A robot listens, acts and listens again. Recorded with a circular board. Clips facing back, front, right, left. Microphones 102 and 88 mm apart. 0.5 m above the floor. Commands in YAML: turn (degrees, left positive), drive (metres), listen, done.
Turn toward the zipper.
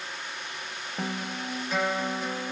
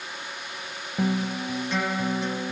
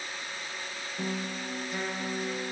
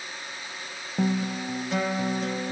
listen: true
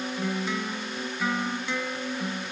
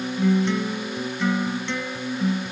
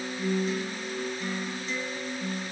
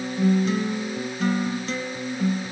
listen: true
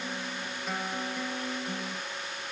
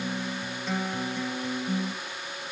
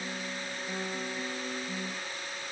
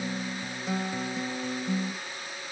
done: "I can't make out a zipper, only a guitar."